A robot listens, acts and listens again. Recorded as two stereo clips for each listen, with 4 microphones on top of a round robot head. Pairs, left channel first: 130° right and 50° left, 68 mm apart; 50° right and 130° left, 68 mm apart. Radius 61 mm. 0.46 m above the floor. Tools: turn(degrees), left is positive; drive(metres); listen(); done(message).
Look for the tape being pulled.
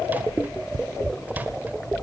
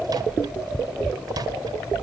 listen()
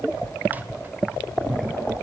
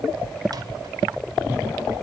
listen()
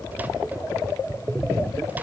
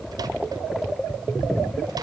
done("I can't make out tape being pulled.")